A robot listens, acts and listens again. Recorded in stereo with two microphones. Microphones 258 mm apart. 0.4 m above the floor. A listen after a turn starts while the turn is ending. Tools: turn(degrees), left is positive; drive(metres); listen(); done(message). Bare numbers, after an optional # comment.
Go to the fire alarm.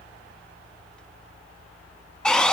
listen()
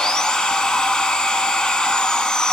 listen()
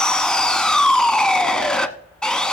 done("I can't make out a fire alarm, only sawing.")